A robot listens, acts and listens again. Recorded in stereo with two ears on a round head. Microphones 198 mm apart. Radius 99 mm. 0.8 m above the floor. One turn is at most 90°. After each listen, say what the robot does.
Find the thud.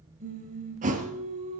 Turn 35° right.
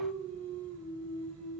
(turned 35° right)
Keep listening.
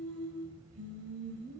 I heard a thud, but can't make it out now. It was about straight ahead or 110° right.